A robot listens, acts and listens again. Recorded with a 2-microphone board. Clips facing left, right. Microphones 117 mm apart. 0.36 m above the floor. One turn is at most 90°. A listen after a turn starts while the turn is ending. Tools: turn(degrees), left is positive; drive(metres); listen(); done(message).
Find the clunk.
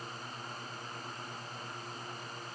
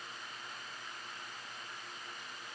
listen()
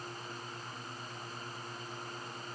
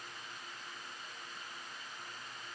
listen()
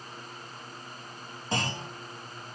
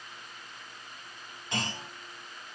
turn(degrees=35)
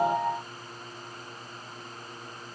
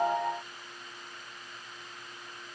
listen()
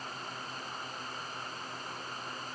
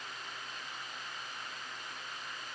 done("I heard a clunk, but can't make it out now. It was about straight ahead or 110° left.")